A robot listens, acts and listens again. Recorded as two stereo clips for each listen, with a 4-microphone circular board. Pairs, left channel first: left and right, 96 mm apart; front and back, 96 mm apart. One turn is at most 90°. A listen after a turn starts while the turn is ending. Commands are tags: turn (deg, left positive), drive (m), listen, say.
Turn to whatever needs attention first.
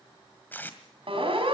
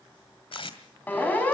<turn deg="-75"/>
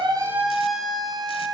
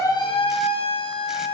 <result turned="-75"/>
<say>Found it: a siren, straight ahead.</say>